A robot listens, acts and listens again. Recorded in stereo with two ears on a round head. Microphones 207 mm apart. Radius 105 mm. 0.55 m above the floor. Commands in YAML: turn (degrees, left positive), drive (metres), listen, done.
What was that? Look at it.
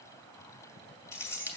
turn: 30
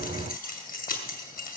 turn: 140
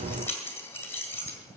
turn: 10
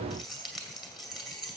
done: "Facing the keys jangling."